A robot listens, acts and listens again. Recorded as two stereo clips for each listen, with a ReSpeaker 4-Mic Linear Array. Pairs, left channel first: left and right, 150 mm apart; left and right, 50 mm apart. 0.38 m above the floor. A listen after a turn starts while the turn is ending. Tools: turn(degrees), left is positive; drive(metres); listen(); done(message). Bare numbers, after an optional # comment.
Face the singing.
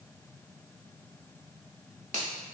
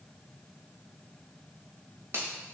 listen()
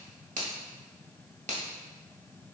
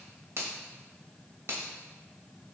listen()
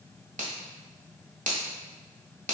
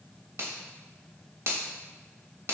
done("I can't make out singing, only a finger snap.")